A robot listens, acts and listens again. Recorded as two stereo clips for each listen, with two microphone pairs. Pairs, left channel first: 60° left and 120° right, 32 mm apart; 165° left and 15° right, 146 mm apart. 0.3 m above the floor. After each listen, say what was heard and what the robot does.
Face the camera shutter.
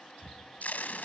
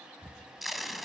The camera shutter: 90° right. Turn 90° right.
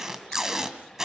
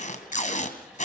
Keep listening.
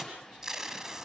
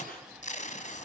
Keep listening.
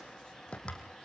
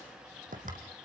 Found it: a camera shutter, straight ahead, 2 to 4 m away.